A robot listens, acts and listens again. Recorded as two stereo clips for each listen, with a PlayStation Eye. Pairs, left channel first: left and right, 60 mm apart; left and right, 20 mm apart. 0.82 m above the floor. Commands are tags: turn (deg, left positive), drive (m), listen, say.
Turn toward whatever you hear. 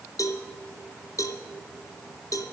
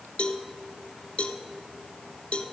<turn deg="70"/>
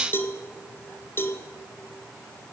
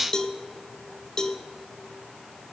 <turn deg="40"/>
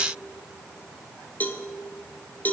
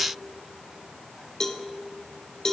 <turn deg="30"/>
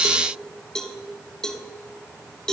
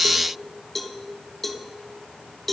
<turn deg="10"/>
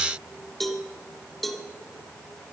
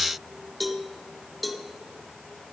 <say>Facing the cowbell.</say>